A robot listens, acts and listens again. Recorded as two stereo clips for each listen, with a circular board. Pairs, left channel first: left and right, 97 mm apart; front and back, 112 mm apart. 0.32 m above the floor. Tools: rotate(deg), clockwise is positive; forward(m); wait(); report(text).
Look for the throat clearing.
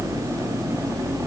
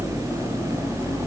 wait()
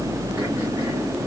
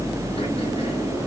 wait()
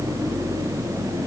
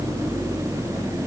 report("I can't make out throat clearing.")